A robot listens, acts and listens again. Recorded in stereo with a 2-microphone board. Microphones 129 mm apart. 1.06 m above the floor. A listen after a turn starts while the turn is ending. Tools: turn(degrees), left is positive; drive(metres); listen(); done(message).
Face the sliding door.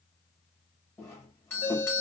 listen()
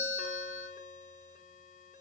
listen()
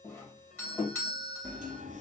turn(degrees=-70)
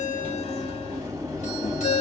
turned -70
turn(degrees=-25)
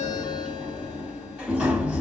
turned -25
turn(degrees=-10)
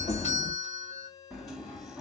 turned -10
done("Facing the sliding door.")